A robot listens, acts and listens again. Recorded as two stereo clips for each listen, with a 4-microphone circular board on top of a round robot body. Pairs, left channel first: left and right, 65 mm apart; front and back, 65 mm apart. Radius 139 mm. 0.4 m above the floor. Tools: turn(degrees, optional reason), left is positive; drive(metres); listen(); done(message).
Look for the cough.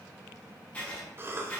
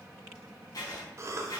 turn(degrees=-140, reason="The cough: 140° right.")
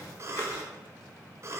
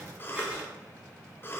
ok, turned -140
turn(degrees=-50, reason="The cough is now 50° right.")
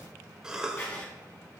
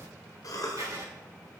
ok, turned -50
turn(degrees=-10, reason="The cough is now 10° right.")
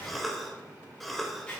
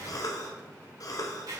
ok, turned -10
done("Found it: a cough, straight ahead, 1 to 2 m away.")